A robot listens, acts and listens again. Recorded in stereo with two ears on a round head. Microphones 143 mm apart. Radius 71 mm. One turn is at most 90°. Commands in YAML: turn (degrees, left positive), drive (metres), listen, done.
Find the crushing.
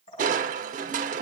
turn: -50
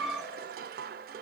turn: -70
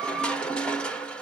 done: "Facing the crushing, under 1 m away."